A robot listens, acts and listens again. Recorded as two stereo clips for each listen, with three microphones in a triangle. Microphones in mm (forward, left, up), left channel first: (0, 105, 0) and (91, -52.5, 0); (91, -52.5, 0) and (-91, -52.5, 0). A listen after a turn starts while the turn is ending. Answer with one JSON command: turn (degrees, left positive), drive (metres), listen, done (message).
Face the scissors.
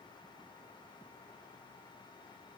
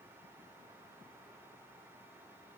{"listen": true}
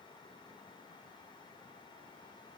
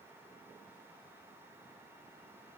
{"listen": true}
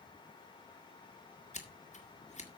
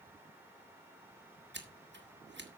{"turn": 170}
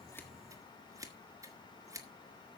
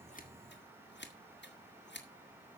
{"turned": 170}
{"turn": 15}
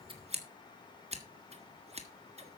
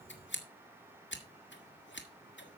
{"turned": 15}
{"done": "Found it: scissors, straight ahead."}